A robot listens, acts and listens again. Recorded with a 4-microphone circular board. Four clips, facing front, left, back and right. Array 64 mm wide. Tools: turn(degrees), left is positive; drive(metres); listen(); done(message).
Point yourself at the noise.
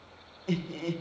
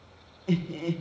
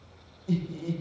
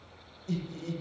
turn(degrees=55)
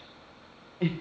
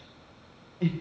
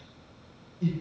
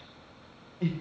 done("Found it: laughter, straight ahead.")